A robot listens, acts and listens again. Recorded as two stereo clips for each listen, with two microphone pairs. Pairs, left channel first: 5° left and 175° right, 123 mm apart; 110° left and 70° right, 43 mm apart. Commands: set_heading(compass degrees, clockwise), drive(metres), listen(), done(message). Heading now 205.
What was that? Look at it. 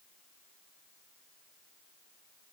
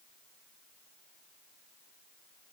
listen()
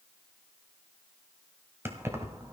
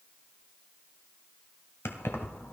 set_heading(85)
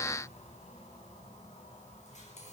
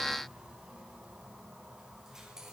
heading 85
done("Found it: keys jangling, straight ahead.")